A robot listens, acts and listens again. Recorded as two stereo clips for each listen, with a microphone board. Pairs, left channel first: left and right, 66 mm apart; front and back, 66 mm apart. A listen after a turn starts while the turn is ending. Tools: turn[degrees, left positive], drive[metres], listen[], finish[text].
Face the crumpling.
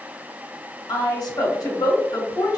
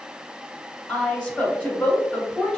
Action: listen[]
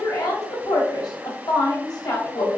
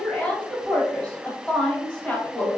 Action: listen[]
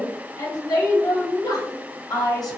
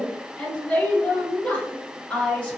Action: finish[I can't make out crumpling to turn to.]